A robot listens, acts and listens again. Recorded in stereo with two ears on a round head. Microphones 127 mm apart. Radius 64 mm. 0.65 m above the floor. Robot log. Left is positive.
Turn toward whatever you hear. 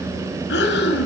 cmd yaw +90
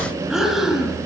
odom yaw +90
end: Facing the breathing.